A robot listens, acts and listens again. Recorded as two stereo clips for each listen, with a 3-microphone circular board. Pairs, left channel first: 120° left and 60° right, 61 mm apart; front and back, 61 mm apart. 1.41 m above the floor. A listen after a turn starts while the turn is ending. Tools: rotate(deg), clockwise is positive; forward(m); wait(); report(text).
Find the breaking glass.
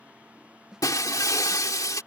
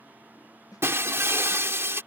rotate(-135)
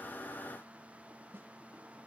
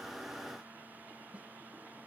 report("I heard breaking glass from this way, but can't make it out now.")